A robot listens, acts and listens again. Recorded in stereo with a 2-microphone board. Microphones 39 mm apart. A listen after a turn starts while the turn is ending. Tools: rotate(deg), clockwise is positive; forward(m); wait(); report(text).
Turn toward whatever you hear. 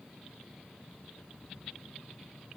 wait()
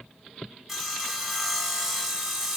rotate(30)
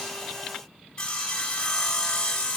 rotate(-20)
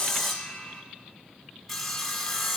report("Facing the sawing.")